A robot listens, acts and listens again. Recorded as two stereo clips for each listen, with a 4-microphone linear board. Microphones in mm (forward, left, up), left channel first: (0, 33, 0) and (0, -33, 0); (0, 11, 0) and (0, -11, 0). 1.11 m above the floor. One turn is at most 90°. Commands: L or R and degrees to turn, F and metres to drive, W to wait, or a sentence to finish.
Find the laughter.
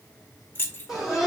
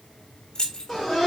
R30
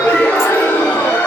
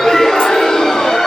L25
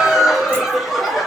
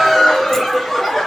Facing the laughter.